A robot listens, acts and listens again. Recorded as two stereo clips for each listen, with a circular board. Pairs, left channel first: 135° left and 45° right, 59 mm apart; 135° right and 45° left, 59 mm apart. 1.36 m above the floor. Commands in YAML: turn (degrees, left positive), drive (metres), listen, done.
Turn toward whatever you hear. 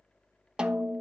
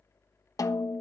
turn: -120
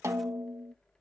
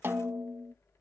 done: "Facing the snare drum."